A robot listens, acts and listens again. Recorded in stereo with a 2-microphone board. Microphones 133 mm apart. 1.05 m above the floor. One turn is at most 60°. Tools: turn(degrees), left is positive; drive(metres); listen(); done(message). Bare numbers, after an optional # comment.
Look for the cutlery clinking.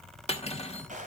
# The cutlery clinking: about 50° left or 130° left.
turn(50)
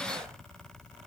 listen()
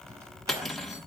done("Facing the cutlery clinking.")